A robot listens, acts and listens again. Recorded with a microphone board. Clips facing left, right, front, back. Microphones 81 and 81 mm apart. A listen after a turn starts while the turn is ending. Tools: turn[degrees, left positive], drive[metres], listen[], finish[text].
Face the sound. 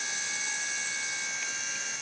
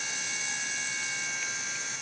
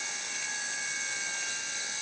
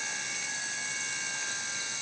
Action: listen[]
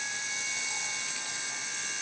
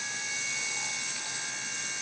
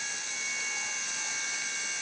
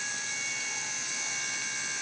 Action: listen[]
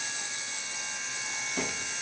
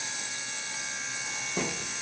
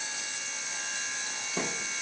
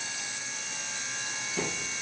Thought: The thud: 45° right.
Action: turn[-45]
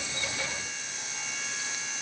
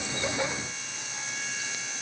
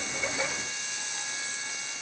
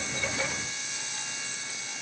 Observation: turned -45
Action: finish[I heard a thud from this way, but can't make it out now.]